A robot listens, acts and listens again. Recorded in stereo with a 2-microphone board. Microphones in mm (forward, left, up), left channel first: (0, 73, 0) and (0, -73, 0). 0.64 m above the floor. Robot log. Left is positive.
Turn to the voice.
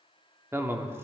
note: The man speaking: about 20° right or 160° right.
cmd yaw -20
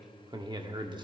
note: So it is at 140° right.
cmd yaw -140
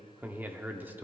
note: The man speaking is now 15° right.
cmd yaw -15
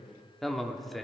end: Facing the man speaking, under 1 m away.